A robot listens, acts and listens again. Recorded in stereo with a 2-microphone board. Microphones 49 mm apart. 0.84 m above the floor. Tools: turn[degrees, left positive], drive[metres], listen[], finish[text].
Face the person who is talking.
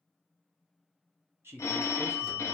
Thought: The man speaking: about 55° right or 125° right.
Action: turn[-55]
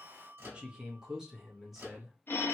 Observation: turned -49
Action: finish[Found it: a man speaking, straight ahead, 1 to 2 m away.]